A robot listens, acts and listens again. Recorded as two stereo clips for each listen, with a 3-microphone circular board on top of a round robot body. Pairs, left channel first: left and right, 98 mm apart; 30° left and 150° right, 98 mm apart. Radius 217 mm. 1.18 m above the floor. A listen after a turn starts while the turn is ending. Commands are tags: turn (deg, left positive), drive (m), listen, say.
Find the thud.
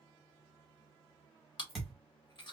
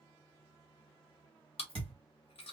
<turn deg="180"/>
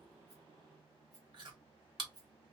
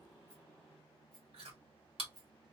<say>I heard a thud from this way, but can't make it out now.</say>